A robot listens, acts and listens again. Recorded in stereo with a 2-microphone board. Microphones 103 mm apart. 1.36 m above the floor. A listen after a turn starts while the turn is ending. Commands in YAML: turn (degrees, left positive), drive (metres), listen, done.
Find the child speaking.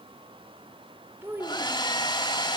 turn: -20
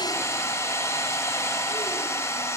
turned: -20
listen: true
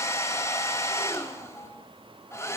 listen: true
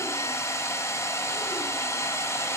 done: "I heard a child speaking, but can't make it out now. It was about straight ahead or 140° right."